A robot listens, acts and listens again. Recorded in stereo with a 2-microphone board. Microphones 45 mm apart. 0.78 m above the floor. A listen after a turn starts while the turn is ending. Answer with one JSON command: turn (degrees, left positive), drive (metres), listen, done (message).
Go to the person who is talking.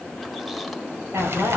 {"turn": -90}
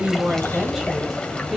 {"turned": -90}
{"listen": true}
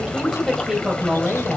{"drive": 1.0}
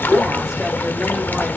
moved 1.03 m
{"listen": true}
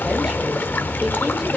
{"listen": true}
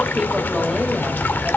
{"done": "I heard a woman speaking from this way, but can't make it out now. I did not reach it."}